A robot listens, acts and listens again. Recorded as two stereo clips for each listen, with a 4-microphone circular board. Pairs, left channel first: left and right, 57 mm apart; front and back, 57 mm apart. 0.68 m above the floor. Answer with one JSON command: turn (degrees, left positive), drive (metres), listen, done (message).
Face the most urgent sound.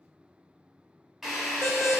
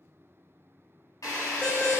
{"turn": -65}
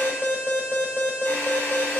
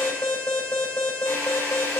{"turn": -25}
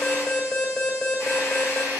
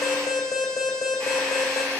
{"done": "Found it: an alarm, straight ahead."}